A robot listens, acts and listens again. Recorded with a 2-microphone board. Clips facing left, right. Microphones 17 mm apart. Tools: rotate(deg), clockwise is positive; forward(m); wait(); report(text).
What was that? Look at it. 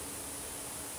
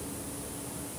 wait()
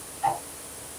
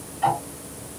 rotate(60)
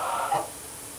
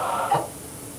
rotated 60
rotate(45)
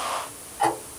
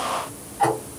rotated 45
rotate(-10)
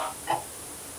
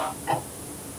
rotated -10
report("Facing the ticking.")